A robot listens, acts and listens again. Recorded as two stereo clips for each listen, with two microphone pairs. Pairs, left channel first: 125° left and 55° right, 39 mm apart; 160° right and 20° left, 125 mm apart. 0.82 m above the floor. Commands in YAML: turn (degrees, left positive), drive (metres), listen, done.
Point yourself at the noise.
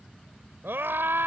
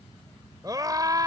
turn: -40
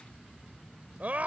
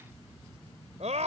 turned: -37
done: "Found it: a scream, straight ahead."